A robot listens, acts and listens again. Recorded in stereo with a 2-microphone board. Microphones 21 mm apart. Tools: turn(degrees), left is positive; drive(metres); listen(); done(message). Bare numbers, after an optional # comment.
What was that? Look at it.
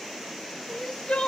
# The crying: about 70° left or 110° left.
turn(70)
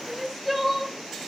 done("Found it: crying, straight ahead.")